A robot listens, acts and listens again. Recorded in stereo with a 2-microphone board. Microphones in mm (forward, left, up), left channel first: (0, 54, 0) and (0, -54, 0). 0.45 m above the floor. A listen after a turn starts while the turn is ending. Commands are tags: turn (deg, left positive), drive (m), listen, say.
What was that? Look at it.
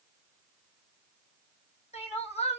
<turn deg="90"/>
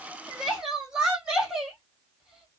<say>Facing the crying, 2 to 4 m away.</say>